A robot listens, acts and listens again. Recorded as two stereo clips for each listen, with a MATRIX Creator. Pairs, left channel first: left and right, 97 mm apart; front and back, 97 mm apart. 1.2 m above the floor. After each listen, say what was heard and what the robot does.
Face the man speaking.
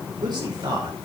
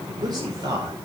The man speaking: 130° right. Turn 130° right.
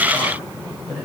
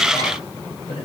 Found it: a man speaking, straight ahead.